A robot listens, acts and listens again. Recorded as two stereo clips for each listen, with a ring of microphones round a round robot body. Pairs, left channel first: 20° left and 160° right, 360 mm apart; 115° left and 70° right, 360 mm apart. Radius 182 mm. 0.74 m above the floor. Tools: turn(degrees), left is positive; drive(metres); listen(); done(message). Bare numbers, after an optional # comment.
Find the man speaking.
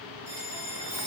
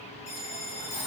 listen()
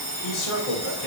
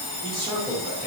# The man speaking: 20° left.
turn(20)
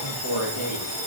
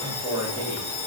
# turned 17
# The man speaking is now 25° left.
turn(25)
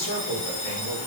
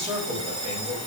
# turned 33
# The man speaking is now 20° left.
turn(20)
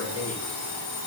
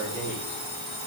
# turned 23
done("Facing the man speaking, 1 to 2 m away.")